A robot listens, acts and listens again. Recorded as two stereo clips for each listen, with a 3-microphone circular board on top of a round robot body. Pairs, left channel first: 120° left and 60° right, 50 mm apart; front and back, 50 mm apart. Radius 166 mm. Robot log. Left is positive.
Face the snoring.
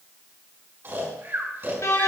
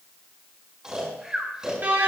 note: The snoring: 100° right.
cmd yaw -100
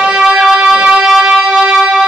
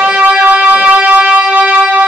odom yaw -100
cmd idle
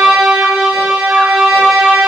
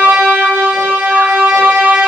cmd idle
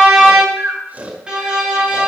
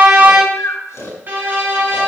end: Found it: snoring, straight ahead.